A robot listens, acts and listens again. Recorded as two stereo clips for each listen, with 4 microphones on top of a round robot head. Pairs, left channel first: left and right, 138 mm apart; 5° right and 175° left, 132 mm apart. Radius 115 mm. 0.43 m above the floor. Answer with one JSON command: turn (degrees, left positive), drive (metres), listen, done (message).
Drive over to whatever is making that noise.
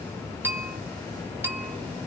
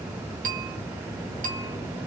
{"turn": -165}
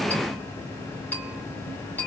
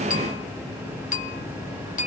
{"turn": 10}
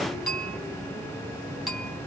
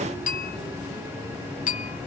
{"drive": 1.0}
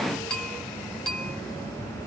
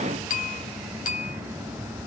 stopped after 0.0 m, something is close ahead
{"done": "Something is in my way. I am facing the bell but have not reached it."}